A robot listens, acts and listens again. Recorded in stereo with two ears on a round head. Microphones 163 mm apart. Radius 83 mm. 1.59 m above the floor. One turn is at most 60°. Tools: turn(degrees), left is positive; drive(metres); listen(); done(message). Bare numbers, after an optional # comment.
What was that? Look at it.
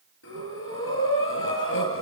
turn(60)
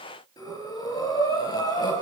# So it is at 25° left.
turn(25)
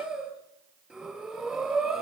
done("Found it: breathing, straight ahead, over 4 m away.")